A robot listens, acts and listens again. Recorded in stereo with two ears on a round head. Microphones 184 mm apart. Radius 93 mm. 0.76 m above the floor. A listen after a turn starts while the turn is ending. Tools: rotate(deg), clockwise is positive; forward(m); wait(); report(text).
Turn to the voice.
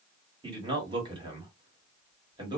rotate(25)
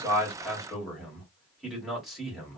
report("Found it: a man speaking, straight ahead.")